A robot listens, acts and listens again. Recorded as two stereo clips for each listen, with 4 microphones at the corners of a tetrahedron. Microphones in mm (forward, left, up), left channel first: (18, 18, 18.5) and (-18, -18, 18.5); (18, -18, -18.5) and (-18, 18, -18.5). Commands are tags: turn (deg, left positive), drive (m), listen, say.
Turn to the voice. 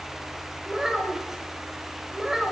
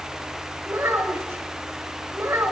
<turn deg="145"/>
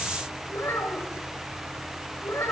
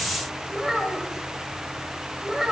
<turn deg="55"/>
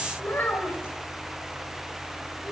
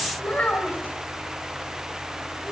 <turn deg="15"/>
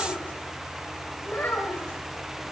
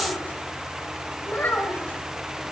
<say>Facing the child speaking.</say>